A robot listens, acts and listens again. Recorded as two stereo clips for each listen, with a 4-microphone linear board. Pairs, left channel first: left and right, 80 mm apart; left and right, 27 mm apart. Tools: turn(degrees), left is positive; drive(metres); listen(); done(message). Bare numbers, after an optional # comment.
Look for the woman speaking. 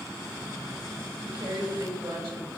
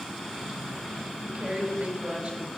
turn(-90)
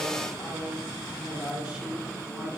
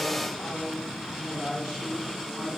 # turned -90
# So it is at 10° right.
turn(-10)
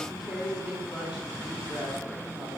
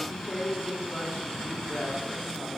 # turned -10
done("Found it: a woman speaking, straight ahead, over 4 m away.")